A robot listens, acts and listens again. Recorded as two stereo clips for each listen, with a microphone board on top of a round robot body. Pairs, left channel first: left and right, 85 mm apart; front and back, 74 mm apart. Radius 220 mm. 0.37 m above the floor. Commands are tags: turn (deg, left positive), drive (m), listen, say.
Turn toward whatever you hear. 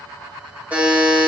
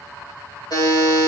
<turn deg="-20"/>
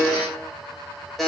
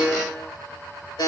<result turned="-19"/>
<say>Facing the buzzer, 2 to 4 m away.</say>